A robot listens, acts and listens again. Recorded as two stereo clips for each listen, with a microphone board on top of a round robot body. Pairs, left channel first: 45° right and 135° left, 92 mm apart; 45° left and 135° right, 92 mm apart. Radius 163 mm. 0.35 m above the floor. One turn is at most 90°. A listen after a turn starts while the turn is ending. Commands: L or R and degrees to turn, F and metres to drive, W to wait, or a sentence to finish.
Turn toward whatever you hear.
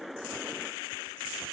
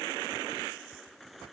W
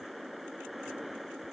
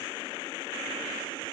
W
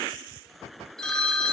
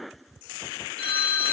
L40
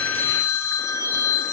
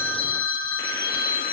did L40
L15
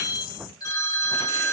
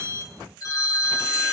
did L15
Found it: a phone ringing, straight ahead, 1 to 2 m away.